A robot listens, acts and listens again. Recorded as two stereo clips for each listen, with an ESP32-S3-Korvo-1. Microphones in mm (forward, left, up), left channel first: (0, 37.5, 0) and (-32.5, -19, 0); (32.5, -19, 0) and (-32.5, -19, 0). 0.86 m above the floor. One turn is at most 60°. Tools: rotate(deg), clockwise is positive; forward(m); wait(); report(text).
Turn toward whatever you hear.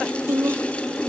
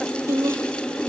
rotate(60)
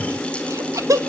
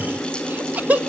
rotate(60)
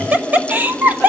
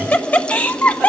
rotate(60)
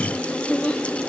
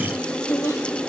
report("Facing the laughter.")